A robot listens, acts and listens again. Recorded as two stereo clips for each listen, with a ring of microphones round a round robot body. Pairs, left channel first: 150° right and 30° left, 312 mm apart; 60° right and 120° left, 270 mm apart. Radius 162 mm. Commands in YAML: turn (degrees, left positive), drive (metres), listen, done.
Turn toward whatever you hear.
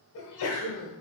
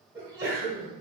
turn: -160
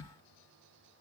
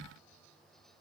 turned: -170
turn: 10
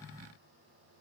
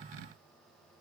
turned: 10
done: "I heard a sneeze from this way, but can't make it out now."